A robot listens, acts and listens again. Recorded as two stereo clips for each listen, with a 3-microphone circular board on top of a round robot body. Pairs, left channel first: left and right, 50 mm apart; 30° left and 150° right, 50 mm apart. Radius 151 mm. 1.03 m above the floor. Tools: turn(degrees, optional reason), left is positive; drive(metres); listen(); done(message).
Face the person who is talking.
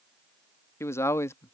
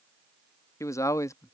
turn(degrees=50, reason="The man speaking: 50° left.")
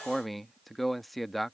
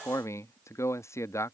done("Facing the man speaking.")